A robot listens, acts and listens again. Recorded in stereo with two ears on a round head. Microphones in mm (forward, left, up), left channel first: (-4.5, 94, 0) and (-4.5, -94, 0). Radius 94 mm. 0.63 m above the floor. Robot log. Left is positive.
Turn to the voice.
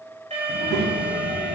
note: The child speaking: about 65° right or 115° right.
cmd yaw -65
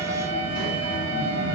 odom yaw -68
note: So it is at 45° right.
cmd yaw -45
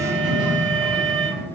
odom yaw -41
end: Found it: a child speaking, straight ahead, 2 to 4 m away.